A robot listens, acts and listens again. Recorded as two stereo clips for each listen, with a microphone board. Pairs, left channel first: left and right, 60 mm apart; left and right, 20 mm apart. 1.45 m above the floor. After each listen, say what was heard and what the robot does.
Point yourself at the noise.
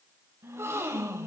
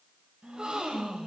The gasp: about 50° right or 130° right. Turn 50° right.
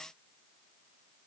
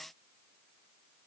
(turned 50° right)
Keep listening.
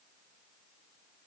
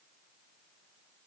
I heard a gasp, but can't make it out now. It was about straight ahead or 80° right.